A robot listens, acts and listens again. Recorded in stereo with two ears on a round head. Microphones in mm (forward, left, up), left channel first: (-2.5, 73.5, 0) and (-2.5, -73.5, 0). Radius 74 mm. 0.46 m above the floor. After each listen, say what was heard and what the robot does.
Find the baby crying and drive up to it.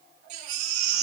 The baby crying: about 50° right or 130° right. Turn 50° right.
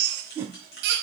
So it is at 80° right. Turn 80° right.
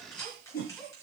Keep listening.
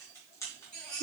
Drive 1.0 m forward.
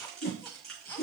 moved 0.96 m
The baby crying is now 15° left. Turn 15° left.
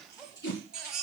Drive 1.0 m forward.
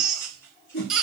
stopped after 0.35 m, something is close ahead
I am next to the baby crying.